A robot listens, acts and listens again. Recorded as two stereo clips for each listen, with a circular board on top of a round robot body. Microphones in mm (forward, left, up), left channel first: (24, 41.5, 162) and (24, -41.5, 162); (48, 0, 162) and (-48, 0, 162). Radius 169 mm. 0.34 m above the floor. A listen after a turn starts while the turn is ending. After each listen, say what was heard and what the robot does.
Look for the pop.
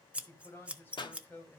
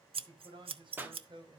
The pop: 110° left. Turn 110° left.
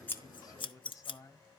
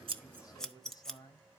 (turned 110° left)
I heard a pop from this way, but can't make it out now.